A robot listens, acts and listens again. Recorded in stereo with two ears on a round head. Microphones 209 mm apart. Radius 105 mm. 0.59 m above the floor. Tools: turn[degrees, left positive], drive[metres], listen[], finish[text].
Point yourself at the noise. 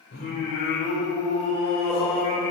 Thought: The singing: about 20° left or 160° left.
Action: turn[20]
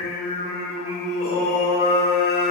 Thought: So it is at 20° right.
Action: turn[-20]
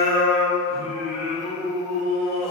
Thought: The singing is now 25° right.
Action: turn[-25]
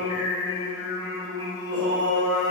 Thought: The singing is now 15° right.
Action: turn[-15]
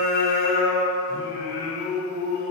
Action: finish[Facing the singing, 2 to 4 m away.]